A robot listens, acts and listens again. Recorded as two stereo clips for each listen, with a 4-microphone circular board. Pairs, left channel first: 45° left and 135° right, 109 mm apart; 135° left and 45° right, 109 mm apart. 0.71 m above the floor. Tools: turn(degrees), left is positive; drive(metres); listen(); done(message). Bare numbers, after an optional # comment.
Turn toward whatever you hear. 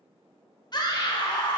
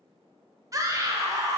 done("Facing the scream.")